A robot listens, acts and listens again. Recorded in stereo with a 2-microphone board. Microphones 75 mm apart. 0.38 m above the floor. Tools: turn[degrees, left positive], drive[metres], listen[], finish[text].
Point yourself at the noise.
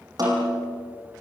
Thought: The snare drum: about 55° right or 125° right.
Action: turn[-55]
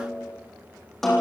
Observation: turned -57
Action: finish[Found it: a snare drum, straight ahead.]